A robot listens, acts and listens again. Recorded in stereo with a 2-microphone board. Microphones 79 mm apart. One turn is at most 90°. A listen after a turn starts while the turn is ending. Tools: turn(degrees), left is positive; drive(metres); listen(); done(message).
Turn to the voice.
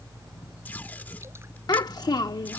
turn(degrees=60)
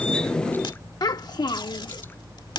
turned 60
turn(degrees=60)
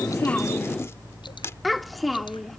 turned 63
done("Facing the child speaking.")